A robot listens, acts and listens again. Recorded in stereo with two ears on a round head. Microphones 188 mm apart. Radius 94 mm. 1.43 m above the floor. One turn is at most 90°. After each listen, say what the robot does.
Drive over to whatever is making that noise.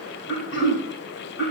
Turn 65° left.
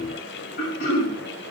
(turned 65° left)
Turn 50° left.
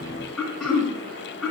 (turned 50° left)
Drive 1.0 m forward.
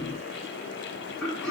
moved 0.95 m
Drive 1.0 m forward.
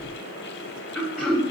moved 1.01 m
Drive 1.0 m forward.
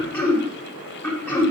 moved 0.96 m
Turn 10° left.
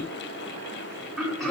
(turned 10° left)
Drive 1.0 m forward.
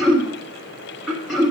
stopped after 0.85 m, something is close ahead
Arrived at the throat clearing, straight ahead.